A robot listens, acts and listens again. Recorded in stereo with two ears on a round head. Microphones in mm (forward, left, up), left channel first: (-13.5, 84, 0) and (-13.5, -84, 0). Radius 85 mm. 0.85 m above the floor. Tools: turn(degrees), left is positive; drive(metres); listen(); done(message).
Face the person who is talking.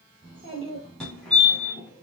turn(degrees=-30)
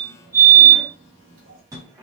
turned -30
turn(degrees=-120)
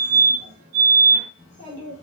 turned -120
turn(degrees=-25)
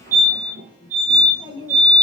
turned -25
turn(degrees=-20)
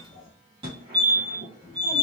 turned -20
done("Found it: a child speaking, straight ahead, 2 to 4 m away.")